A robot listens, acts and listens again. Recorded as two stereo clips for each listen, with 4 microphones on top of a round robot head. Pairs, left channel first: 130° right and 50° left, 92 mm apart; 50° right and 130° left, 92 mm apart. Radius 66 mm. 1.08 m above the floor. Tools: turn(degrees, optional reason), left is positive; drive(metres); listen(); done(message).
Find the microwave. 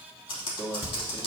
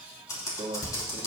turn(degrees=155, reason="The microwave: 155° left.")
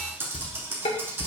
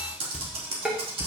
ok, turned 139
turn(degrees=15, reason="Nothing new. It was at 15° left.")
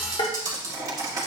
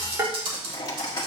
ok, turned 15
done("Facing the microwave, 1 to 2 m away.")